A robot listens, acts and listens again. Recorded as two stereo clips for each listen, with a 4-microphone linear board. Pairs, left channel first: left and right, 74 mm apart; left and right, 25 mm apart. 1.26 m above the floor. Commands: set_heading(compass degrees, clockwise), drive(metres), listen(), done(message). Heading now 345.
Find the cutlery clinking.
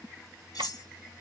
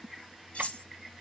set_heading(285)
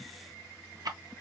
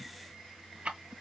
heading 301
listen()
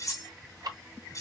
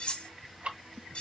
set_heading(241)
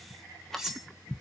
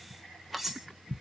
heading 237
done("Found it: cutlery clinking, straight ahead.")